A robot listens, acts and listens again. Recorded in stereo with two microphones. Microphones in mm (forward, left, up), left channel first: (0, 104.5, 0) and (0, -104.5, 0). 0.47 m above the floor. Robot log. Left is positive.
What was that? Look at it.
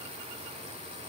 cmd idle
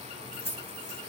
note: The keys jangling: about 55° right or 125° right.
cmd yaw -55
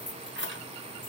note: So it is at 60° right.
cmd yaw -60
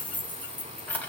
note: The keys jangling is now 10° left.
cmd yaw +10
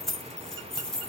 end: Found it: keys jangling, straight ahead.